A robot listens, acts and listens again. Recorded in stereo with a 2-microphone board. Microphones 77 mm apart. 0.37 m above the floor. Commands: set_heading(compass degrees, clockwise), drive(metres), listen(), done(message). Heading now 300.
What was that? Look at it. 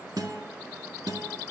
set_heading(0)
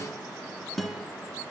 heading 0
done("Facing the guitar, under 1 m away.")